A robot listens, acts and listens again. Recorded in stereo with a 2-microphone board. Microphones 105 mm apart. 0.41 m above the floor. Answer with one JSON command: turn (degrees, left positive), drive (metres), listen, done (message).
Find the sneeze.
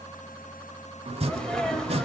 {"turn": 30}
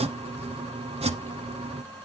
{"listen": true}
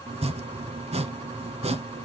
{"done": "I heard a sneeze, but can't make it out now. It was about 25° right or 145° left."}